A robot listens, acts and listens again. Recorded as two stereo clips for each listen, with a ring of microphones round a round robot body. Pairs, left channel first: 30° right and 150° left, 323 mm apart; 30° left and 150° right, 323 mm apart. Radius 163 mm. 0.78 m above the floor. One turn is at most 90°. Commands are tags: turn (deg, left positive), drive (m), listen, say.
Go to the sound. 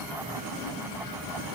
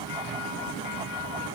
<listen/>
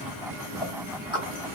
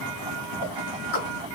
<turn deg="70"/>
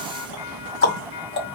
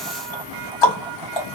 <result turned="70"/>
<turn deg="30"/>
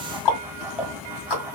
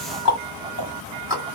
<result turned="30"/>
<turn deg="-15"/>
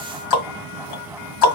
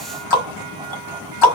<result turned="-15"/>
<drive m="1.0"/>
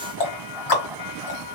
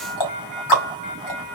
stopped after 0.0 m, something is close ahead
<say>Something is in my way. I am facing the ticking but have not reached it.</say>